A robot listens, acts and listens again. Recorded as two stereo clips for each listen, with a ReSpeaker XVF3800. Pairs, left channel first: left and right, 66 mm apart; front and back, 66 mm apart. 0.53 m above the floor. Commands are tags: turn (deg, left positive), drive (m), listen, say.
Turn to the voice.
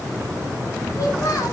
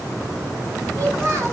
<turn deg="130"/>
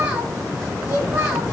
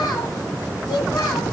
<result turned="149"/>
<turn deg="-20"/>
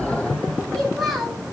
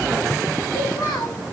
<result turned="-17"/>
<say>Facing the child speaking.</say>